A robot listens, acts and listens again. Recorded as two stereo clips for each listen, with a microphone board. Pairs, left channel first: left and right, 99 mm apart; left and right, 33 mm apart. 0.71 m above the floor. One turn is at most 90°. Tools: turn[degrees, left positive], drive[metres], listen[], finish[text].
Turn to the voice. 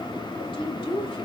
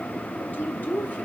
Thought: The woman speaking: about 60° left or 120° left.
Action: turn[60]
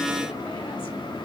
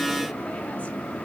Action: listen[]
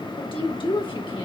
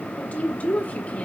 Thought: So it is at 60° left.
Action: turn[60]
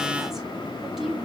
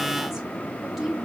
Action: finish[Facing the woman speaking.]